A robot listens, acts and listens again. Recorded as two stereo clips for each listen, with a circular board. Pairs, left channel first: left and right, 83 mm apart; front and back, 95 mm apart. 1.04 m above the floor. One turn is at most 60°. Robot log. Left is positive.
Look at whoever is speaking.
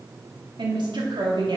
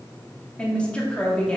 note: The woman speaking: 80° right.
cmd yaw -60
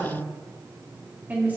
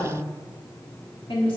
note: The woman speaking is now 20° right.
cmd yaw -20
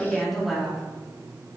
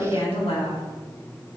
end: Facing the woman speaking, 2 to 4 m away.